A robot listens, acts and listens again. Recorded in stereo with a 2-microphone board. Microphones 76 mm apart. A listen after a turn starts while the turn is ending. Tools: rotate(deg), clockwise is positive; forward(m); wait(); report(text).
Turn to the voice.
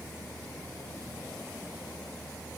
wait()
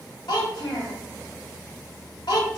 rotate(-70)
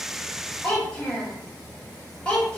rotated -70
rotate(-15)
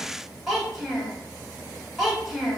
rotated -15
report("Found it: a child speaking, straight ahead, 1 to 2 m away.")